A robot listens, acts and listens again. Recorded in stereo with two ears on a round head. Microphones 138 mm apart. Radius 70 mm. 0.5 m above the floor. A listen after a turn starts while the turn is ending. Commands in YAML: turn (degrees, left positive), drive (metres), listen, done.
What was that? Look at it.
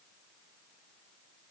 listen: true
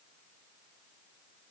listen: true
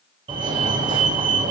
turn: -30
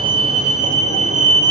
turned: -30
turn: -115
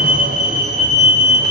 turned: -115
turn: -55
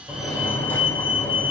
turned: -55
turn: 15
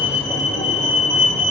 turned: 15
done: "Facing the fire alarm."